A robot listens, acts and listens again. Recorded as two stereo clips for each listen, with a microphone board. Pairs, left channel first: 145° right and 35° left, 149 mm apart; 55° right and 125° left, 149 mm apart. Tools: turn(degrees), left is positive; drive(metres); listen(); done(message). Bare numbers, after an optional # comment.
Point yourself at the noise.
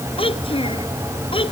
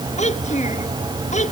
# The child speaking: 90° right.
turn(-90)
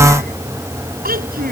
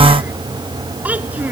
# The child speaking is now 45° left.
turn(45)
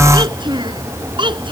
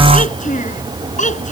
# The child speaking is now 25° right.
turn(-25)
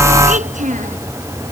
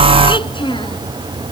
done("Found it: a child speaking, straight ahead.")